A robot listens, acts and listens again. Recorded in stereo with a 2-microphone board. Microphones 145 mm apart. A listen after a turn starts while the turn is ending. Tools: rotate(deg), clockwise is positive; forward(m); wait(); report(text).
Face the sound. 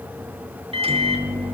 rotate(40)
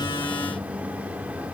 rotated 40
rotate(10)
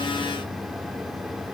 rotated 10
wait()
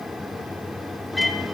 report("Facing the microwave.")